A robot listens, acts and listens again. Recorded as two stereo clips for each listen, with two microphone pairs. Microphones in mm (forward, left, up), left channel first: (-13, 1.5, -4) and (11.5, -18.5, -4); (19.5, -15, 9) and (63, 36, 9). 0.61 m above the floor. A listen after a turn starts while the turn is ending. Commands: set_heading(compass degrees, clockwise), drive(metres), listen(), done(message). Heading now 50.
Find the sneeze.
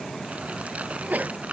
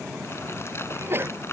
done("Found it: a sneeze, straight ahead.")